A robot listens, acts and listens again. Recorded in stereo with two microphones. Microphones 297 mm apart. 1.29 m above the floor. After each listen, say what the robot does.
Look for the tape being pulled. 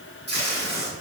Turn 35° right.
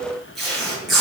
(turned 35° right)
Facing the tape being pulled, 2 to 4 m away.